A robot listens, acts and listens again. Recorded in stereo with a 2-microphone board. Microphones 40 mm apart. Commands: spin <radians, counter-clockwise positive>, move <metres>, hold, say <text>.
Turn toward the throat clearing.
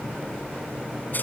hold
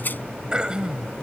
spin -0.35
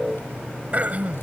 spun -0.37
spin -2.44
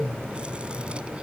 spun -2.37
hold
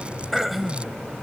say Facing the throat clearing.